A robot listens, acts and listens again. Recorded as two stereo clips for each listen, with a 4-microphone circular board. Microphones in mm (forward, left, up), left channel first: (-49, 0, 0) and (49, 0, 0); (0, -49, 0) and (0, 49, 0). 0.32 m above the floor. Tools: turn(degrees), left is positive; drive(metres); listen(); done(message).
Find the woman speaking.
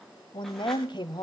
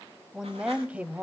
turn(degrees=160)
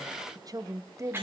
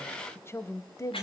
turn(degrees=-50)
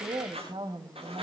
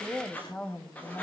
turn(degrees=-20)
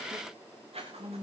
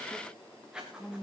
turn(degrees=-10)
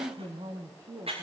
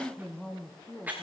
done("Found it: a woman speaking, straight ahead.")